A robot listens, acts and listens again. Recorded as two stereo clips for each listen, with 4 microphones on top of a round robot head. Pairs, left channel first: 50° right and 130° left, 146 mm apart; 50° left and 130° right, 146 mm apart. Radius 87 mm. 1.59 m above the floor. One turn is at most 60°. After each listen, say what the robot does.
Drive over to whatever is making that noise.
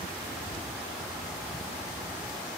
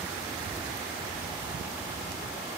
Keep listening.
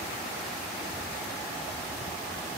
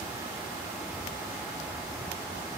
Keep listening.
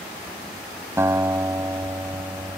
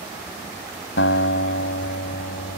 Turn 60° left.
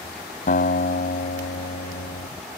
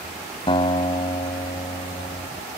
Turn 10° right.
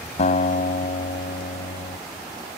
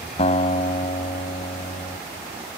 Drive 1.0 m forward.
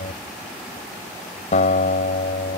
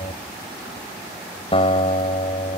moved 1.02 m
Drive 1.0 m forward.
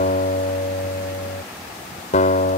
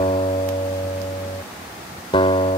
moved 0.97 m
Drive 1.0 m forward.
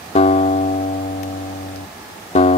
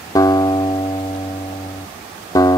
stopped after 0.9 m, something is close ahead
Turn 10° right.
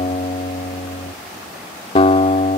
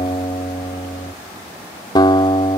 Arrived at the guitar, straight ahead.